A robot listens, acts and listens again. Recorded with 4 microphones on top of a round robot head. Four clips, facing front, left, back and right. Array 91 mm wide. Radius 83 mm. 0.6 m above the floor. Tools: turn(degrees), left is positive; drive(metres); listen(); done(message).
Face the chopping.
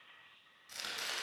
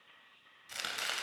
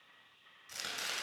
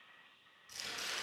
turn(degrees=95)
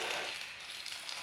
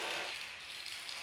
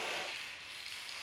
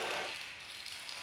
turn(degrees=-10)
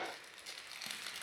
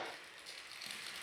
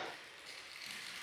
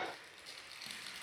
done("Facing the chopping.")